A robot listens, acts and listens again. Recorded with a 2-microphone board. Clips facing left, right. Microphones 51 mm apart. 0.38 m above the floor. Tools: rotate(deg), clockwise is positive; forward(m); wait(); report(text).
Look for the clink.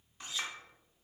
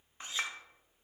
rotate(30)
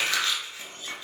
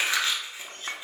rotate(115)
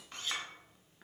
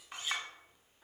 rotate(15)
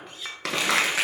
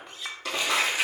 report("Found it: a clink, straight ahead.")